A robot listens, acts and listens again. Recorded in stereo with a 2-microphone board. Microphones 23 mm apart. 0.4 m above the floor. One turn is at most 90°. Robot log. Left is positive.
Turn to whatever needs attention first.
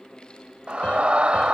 note: The scream: about 50° right or 130° right.
cmd yaw -50
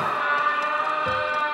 note: So it is at 15° right.
cmd yaw -15
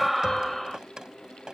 end: Found it: a scream, straight ahead.